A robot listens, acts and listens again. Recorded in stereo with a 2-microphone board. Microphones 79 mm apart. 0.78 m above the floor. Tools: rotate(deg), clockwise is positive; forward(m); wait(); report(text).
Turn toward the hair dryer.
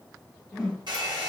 rotate(70)
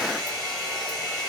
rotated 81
rotate(-15)
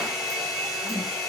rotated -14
report("Found it: a hair dryer, straight ahead.")